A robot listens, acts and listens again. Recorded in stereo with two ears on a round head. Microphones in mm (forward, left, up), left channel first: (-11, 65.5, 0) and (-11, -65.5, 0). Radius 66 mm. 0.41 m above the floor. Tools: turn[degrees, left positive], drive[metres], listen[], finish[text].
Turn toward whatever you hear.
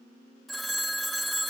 Action: turn[30]
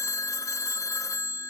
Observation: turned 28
Thought: So it is at 155° left.
Action: turn[155]
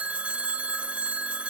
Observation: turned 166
Thought: The phone ringing is now 10° right.
Action: turn[-10]
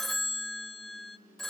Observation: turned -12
Action: finish[Facing the phone ringing, under 1 m away.]